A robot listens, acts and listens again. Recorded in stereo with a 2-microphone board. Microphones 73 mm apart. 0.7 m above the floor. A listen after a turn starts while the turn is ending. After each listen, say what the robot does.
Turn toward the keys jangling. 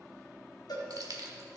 Turn 65° right.
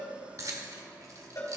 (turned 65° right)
Turn 50° right.
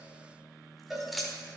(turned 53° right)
Found it: keys jangling, straight ahead.